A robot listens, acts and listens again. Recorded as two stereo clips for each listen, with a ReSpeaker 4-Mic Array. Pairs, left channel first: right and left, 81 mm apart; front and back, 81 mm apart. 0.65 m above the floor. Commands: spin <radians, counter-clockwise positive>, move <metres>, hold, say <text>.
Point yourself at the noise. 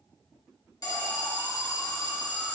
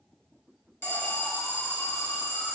spin -0.96
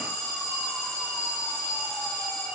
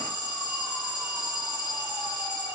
spin -0.17
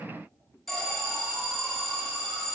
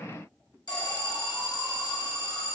say Found it: an alarm, straight ahead, 1 to 2 m away.